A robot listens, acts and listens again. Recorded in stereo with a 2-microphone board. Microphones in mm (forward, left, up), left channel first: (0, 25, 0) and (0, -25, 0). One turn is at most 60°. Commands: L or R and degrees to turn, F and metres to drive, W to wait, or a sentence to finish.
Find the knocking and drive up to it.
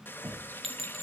R55
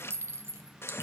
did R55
W
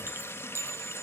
W
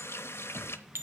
R60
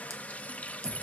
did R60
W
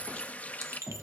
R25
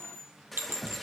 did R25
F1.0
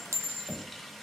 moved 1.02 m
F1.0
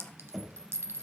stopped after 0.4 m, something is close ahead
I am next to the knocking.